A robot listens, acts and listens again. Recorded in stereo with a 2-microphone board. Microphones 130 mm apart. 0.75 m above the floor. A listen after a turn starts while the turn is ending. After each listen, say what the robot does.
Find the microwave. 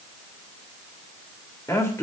Keep listening.
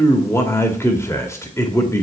Keep listening.
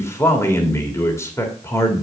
I can't make out a microwave to turn to.